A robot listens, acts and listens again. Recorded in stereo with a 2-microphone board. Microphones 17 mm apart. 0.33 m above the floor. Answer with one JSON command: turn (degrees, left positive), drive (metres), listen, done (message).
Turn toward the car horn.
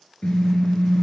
{"turn": 70}
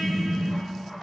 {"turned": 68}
{"turn": 35}
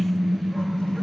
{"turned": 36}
{"done": "Found it: a car horn, straight ahead."}